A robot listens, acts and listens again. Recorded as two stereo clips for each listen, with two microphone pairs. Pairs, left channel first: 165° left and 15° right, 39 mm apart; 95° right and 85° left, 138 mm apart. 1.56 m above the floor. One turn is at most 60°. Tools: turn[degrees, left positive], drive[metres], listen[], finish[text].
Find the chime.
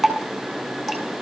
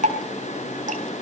Action: listen[]
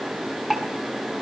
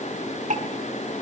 Action: listen[]
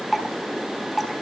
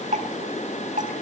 Action: finish[I can't make out a chime, only dripping.]